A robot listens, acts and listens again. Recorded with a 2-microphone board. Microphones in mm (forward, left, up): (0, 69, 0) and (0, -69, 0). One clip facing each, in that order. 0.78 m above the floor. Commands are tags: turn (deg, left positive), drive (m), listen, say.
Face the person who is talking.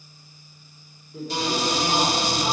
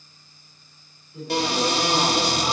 <turn deg="45"/>
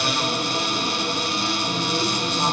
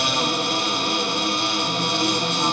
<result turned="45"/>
<listen/>
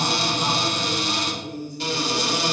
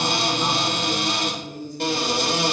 <turn deg="90"/>
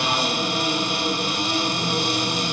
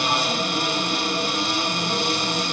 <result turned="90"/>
<listen/>
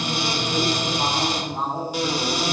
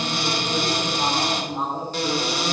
<turn deg="15"/>
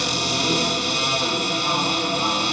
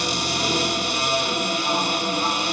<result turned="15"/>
<listen/>
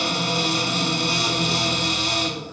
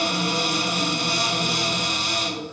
<listen/>
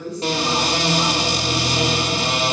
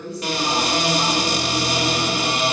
<say>Found it: a woman speaking, straight ahead.</say>